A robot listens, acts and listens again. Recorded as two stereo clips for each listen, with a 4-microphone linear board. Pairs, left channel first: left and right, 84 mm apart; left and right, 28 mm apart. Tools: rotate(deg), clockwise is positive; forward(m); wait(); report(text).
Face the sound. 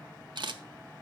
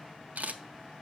rotate(65)
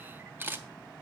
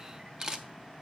rotate(25)
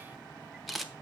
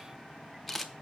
report("Found it: a camera shutter, straight ahead.")